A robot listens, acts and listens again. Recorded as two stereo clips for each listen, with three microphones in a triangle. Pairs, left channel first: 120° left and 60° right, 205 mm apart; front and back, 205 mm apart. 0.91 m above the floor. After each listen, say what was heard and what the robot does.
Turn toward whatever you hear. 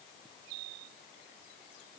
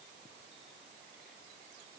Keep listening.
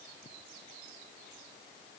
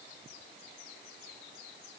Keep listening.
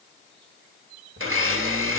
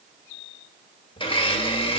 The blender: 65° right. Turn 65° right.
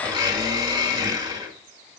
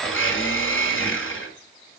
The blender is now 10° left. Turn 10° left.
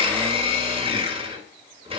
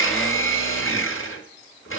Found it: a blender, straight ahead.